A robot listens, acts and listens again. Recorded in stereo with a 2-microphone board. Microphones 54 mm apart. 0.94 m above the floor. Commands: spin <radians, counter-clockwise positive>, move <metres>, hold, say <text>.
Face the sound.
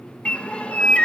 spin 0.44
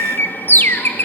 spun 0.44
spin 2.27
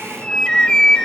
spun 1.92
spin 0.35
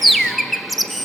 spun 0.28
say Facing the bird.